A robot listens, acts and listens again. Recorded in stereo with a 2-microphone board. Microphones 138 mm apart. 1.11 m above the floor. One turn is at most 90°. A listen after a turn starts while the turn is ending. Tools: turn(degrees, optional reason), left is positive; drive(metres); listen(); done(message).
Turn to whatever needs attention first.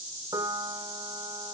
listen()
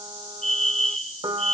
turn(degrees=65, reason="The fire alarm: about 65° left or 115° left.")
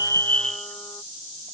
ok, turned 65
done("Found it: a fire alarm, straight ahead.")